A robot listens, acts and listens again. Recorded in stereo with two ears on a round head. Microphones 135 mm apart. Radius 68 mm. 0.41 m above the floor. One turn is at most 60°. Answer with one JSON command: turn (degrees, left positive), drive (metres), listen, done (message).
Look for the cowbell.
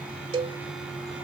{"turn": -35}
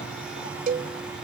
{"turn": -60}
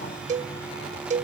{"turn": -60}
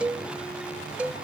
{"turn": -10}
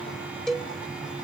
{"done": "Found it: a cowbell, straight ahead."}